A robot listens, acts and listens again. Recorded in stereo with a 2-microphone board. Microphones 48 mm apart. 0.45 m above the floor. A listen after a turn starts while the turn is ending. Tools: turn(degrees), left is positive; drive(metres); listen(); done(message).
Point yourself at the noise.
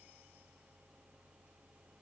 listen()
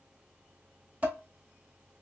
turn(degrees=-30)
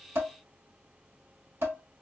turn(degrees=-115)
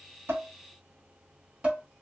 turn(degrees=-30)
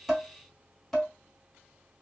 done("Facing the dishes clattering.")